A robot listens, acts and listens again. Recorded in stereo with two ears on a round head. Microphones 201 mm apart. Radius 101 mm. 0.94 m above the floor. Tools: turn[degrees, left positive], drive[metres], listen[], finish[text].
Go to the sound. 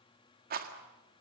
Thought: The rattle: about 40° right or 140° right.
Action: turn[-40]
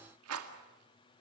Thought: So it is at 95° right.
Action: turn[-95]
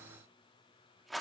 Action: drive[1.0]
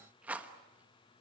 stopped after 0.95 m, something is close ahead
Thought: The rattle is now 10° right.
Action: turn[-10]
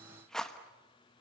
Action: finish[Arrived at the rattle, straight ahead.]